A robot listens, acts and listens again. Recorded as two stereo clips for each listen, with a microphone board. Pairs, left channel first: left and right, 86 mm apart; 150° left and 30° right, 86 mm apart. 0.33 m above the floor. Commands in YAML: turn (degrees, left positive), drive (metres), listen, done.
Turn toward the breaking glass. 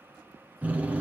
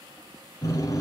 listen: true
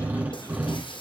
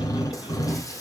turn: 100
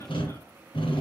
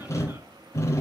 done: "Facing where the breaking glass came from. I can't hear it now."